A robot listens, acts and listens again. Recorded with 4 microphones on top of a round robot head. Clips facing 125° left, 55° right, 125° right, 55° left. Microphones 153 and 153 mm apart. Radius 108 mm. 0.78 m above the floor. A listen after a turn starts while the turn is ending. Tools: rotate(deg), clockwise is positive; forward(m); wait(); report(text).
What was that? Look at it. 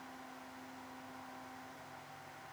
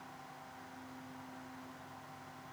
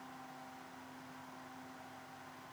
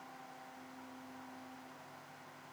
wait()
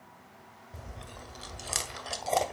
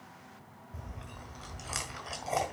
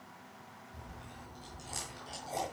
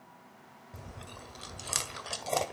rotate(-65)
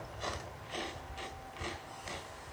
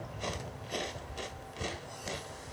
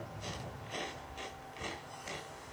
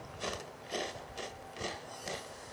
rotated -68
report("Found it: chewing, straight ahead.")